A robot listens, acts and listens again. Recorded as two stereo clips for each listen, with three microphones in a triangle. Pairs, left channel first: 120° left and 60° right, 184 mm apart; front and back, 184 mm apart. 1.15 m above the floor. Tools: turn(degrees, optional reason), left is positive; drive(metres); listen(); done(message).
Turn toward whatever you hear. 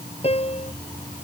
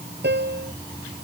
turn(degrees=175, reason="The piano: 175° left.")
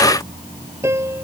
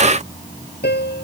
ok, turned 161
turn(degrees=15, reason="The piano is now 15° left.")
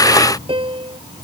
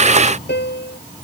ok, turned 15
done("Facing the piano.")